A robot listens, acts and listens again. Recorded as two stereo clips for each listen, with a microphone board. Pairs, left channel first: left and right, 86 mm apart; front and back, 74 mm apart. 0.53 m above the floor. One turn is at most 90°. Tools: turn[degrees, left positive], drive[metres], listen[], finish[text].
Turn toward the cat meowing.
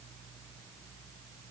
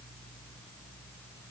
Action: listen[]
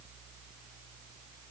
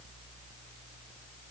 Action: listen[]
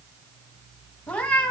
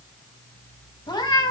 Thought: The cat meowing: 15° left.
Action: turn[15]
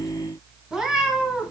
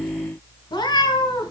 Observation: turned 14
Thought: The cat meowing is now 10° right.
Action: turn[-10]
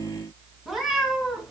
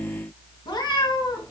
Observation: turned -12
Action: finish[Facing the cat meowing, 2 to 4 m away.]